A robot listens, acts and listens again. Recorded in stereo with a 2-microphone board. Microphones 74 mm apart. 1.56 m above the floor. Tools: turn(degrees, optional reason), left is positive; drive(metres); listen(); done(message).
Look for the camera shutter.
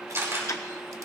turn(degrees=-40, reason="The camera shutter: about 40° right or 140° right.")
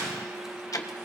listen()
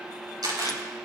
turn(degrees=-95, reason="So it is at 95° right.")
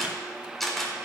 done("Facing the camera shutter, over 4 m away.")